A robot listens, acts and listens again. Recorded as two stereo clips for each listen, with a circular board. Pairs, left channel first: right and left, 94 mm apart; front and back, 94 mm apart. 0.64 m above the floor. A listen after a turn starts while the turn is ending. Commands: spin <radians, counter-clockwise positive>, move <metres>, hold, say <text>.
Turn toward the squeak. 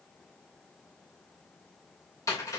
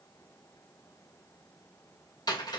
hold
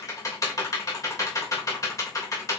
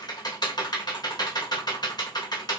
hold
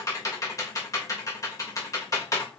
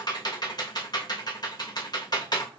say I can't make out a squeak to turn to.